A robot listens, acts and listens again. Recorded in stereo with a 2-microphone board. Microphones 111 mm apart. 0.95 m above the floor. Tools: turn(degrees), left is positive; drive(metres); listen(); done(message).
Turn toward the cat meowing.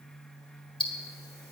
listen()
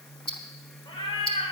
turn(degrees=55)
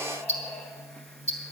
listen()
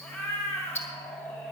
turn(degrees=25)
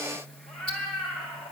turn(degrees=10)
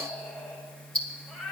done("Found it: a cat meowing, straight ahead, 2 to 4 m away.")